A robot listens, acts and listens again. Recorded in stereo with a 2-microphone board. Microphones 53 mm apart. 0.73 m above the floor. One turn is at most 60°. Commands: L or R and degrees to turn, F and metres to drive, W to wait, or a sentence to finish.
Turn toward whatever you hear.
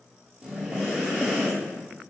R30
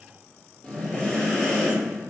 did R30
L15
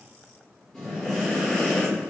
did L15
Facing the breathing, 1 to 2 m away.